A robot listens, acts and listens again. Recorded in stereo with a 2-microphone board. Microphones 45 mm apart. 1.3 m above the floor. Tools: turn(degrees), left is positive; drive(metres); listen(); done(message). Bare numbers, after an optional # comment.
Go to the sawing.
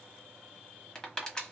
listen()
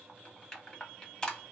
listen()
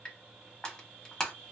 done("I can't make out sawing, only crushing.")